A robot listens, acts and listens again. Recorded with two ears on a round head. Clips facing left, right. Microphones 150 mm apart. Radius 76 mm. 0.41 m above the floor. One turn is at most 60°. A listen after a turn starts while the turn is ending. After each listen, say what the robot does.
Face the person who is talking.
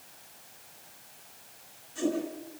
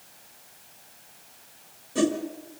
Keep listening.
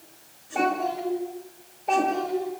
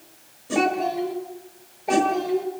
Turn 30° right.
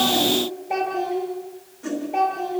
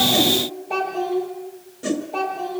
Turn 15° left.
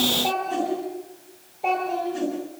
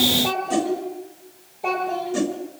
Found it: a child speaking, straight ahead.